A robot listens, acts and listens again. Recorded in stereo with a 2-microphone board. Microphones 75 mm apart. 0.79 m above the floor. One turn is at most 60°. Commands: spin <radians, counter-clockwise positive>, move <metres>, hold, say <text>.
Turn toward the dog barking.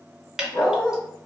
spin 0.61
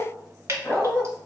spin 0.26
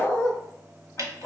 spin 0.26
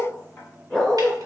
say Facing the dog barking, 2 to 4 m away.